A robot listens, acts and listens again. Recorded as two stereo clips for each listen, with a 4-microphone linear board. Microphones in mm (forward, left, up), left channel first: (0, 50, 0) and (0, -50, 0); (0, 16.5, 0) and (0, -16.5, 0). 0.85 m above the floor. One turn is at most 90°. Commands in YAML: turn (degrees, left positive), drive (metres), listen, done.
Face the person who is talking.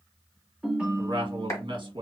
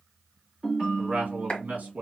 turn: -50
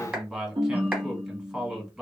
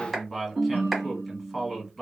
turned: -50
done: "Facing the man speaking."